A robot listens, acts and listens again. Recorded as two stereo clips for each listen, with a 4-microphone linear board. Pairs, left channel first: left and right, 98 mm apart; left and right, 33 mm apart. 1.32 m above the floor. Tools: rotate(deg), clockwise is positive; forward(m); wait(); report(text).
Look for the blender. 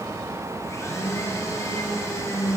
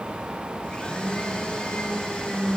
rotate(-35)
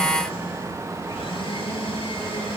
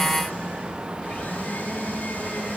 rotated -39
rotate(-110)
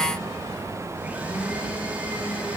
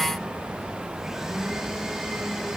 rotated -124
rotate(15)
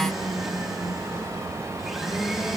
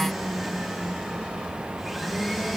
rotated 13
report("Found it: a blender, straight ahead.")